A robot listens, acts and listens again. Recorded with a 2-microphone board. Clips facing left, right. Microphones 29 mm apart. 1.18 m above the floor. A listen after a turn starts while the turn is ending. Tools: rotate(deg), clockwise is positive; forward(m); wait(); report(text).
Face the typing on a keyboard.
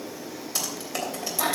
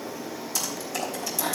rotate(-30)
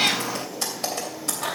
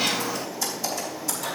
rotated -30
rotate(-120)
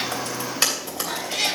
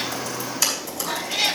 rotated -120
rotate(-40)
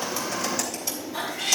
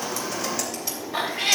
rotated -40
wait()
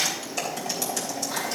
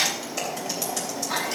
report("Found it: typing on a keyboard, straight ahead, 2 to 4 m away.")